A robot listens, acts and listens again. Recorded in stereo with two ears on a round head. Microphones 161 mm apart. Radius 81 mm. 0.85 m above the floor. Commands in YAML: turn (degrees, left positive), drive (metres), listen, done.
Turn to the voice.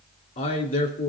turn: 50
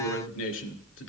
turn: 80
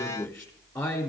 done: "Facing the man speaking, 2 to 4 m away."